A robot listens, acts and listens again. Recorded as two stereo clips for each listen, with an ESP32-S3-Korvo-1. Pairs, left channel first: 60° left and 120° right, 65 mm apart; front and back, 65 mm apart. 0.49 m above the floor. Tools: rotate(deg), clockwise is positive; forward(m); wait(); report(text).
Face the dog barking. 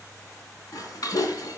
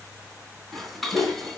rotate(-50)
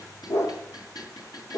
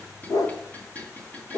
rotate(-25)
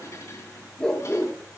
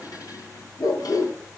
rotate(20)
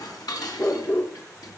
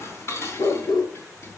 report("Facing the dog barking, 1 to 2 m away.")